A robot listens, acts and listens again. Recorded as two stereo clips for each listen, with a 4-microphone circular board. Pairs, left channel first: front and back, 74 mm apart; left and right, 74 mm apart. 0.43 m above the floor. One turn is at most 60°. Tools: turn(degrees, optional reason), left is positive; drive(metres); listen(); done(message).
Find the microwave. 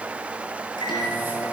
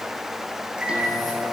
turn(degrees=-15, reason="The microwave: 15° right.")
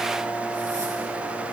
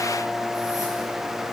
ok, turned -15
done("Found it: a microwave, straight ahead, over 4 m away.")